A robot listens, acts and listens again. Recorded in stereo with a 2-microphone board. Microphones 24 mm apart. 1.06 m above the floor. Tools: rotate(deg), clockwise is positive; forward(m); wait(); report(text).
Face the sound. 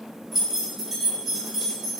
rotate(30)
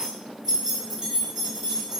rotate(140)
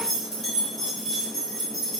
rotate(-10)
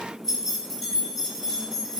report("Found it: keys jangling, straight ahead, 2 to 4 m away.")